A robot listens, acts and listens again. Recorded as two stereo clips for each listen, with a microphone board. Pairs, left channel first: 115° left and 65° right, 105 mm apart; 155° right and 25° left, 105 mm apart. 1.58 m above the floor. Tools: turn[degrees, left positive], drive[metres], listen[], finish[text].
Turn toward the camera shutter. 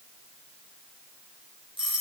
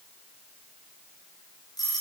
Action: listen[]
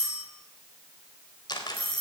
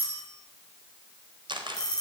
Thought: The camera shutter: 65° left.
Action: turn[65]
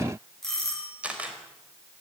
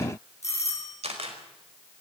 Thought: The camera shutter is now 10° left.
Action: turn[10]
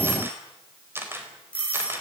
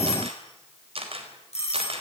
Action: finish[Facing the camera shutter, over 4 m away.]